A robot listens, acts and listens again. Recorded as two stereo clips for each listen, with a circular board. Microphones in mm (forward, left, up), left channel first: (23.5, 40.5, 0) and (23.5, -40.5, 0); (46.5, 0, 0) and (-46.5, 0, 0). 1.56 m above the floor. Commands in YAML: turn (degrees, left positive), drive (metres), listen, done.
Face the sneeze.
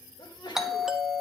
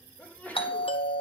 turn: 75
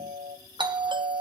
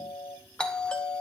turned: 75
done: "Facing where the sneeze came from. I can't hear it now."